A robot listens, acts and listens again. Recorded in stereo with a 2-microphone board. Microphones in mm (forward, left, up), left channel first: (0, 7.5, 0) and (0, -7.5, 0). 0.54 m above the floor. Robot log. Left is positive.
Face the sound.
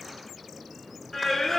note: The singing: about 25° left or 155° left.
cmd yaw +25
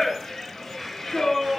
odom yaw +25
note: So it is at 135° left.
cmd yaw +135
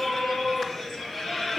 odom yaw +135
note: The singing is now 30° left.
cmd yaw +30
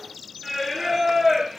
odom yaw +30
note: The singing is now 10° right.
cmd yaw -10
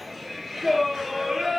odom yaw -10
end: Found it: singing, straight ahead.